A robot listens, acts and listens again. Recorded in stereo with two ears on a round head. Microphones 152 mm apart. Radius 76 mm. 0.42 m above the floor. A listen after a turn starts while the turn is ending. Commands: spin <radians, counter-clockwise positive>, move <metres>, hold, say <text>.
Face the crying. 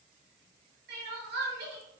spin -1.05
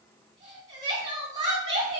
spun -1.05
spin -0.44
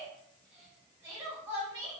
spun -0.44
spin -0.35
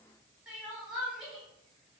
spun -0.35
say Facing the crying.